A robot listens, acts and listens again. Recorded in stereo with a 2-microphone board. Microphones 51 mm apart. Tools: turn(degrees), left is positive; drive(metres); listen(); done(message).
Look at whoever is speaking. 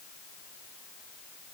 listen()
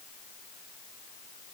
listen()
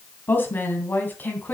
turn(degrees=35)
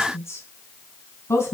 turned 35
turn(degrees=120)
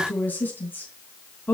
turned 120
turn(degrees=35)
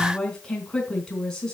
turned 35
turn(degrees=15)
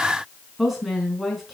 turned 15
done("Found it: a woman speaking, straight ahead, 2 to 4 m away.")